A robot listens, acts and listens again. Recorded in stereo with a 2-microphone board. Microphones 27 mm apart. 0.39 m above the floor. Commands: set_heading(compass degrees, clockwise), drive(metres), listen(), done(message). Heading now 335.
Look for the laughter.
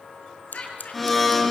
set_heading(285)
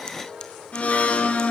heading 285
listen()
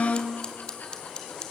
listen()
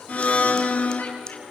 done("I heard laughter, but can't make it out now. It was about straight ahead or 80° left.")